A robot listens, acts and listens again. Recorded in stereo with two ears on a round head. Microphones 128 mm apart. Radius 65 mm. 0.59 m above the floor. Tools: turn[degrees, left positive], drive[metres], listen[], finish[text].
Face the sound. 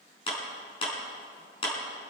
Thought: The clap: about 35° left or 145° left.
Action: turn[35]
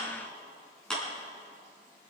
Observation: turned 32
Action: finish[Facing the clap, over 4 m away.]